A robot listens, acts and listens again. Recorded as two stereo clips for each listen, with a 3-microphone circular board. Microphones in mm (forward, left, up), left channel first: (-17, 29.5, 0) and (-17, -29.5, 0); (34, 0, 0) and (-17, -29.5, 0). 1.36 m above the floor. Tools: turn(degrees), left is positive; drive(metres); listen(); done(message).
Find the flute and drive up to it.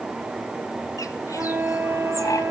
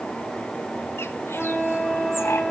turn(degrees=-45)
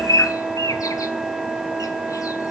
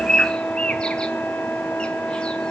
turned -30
turn(degrees=-15)
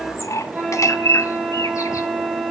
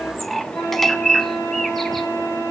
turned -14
drive(metres=1.0)
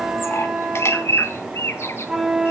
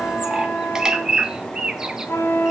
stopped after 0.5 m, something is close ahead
done("Blocked. The flute is further on, straight ahead.")